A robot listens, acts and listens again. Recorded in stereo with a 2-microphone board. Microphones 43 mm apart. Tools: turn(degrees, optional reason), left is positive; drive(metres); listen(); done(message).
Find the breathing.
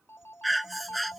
turn(degrees=30)
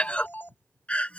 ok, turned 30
turn(degrees=150, reason="So it is at 150° left.")
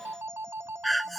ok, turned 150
done("Facing the breathing.")